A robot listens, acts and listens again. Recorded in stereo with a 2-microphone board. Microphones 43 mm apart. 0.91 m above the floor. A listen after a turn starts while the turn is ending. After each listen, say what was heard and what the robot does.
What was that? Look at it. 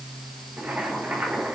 The boiling: about 40° right or 140° right. Turn 40° right.
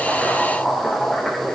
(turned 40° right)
Found it: boiling, straight ahead, over 4 m away.